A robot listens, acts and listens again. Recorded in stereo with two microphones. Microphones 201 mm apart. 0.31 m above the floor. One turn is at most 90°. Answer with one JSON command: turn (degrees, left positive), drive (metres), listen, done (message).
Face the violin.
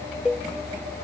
{"listen": true}
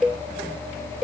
{"listen": true}
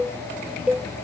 {"done": "I can't make out a violin to turn to."}